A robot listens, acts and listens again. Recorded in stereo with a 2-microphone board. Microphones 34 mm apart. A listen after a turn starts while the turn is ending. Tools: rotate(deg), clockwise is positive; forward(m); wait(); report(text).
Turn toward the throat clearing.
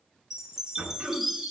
rotate(55)
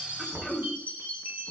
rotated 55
rotate(15)
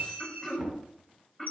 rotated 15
report("Facing the throat clearing.")